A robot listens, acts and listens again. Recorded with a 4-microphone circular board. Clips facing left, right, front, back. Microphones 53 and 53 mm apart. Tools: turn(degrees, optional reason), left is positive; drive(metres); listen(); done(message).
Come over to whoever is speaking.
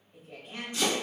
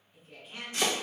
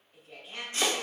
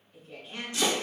turn(degrees=65, reason="The woman speaking: 65° left.")
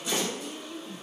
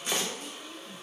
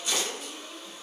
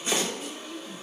drive(metres=1.0)
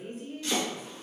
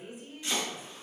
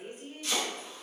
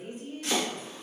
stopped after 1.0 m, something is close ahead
turn(degrees=-15, reason="The woman speaking is now 15° right.")
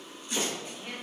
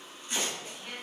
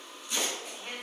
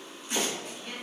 done("I am next to the woman speaking.")